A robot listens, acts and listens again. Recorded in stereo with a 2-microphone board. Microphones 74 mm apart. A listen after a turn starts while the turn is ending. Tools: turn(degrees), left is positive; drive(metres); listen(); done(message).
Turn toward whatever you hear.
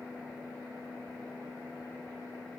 listen()
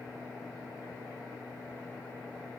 listen()
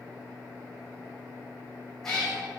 turn(degrees=30)
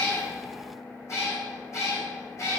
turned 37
turn(degrees=135)
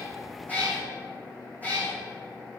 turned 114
turn(degrees=20)
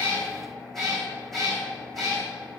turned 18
done("Facing the cat meowing.")